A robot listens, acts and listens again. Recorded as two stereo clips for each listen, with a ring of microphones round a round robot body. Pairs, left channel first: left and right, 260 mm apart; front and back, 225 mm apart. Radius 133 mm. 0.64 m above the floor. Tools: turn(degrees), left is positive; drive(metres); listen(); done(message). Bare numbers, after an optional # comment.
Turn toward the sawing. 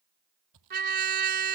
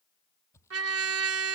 # The sawing: 80° right.
turn(-80)
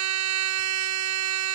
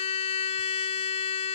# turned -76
listen()
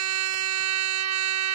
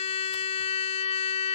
listen()
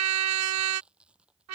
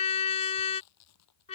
done("Found it: sawing, straight ahead.")